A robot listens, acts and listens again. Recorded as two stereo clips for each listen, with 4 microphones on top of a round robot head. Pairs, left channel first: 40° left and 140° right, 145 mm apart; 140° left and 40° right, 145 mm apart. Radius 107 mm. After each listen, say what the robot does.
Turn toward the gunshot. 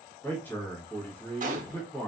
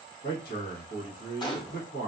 Turn 165° right.
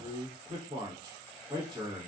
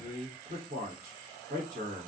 I heard a gunshot from this way, but can't make it out now.